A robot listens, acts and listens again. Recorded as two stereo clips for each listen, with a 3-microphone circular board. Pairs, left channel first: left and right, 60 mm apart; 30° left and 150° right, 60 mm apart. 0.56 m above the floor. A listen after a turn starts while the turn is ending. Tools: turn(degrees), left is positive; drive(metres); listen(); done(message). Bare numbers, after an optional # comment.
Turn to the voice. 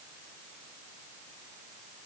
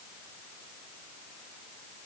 listen()
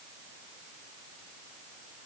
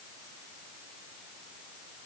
listen()
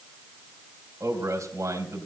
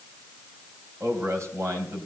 # The man speaking: 115° right.
turn(-115)
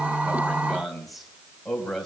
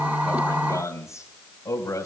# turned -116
done("Facing the man speaking.")